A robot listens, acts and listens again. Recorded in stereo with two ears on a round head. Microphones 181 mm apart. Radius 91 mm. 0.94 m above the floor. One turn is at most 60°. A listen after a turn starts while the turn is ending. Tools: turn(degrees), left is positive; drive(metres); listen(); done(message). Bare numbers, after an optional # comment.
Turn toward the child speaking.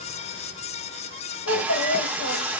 turn(60)
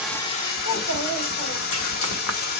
# So it is at 45° left.
turn(45)
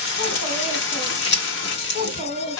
# The child speaking is now 30° left.
turn(30)
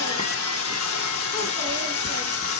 listen()
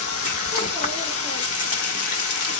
listen()
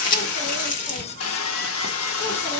done("I heard a child speaking from this way, but can't make it out now.")